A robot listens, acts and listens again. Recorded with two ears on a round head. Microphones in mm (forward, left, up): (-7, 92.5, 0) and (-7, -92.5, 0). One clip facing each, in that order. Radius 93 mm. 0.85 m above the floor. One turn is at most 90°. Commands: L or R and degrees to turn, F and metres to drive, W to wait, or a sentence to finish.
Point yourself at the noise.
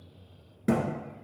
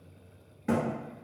L50
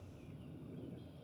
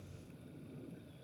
W
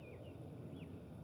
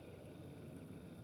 I heard a thud, but can't make it out now. It was about straight ahead or 80° left.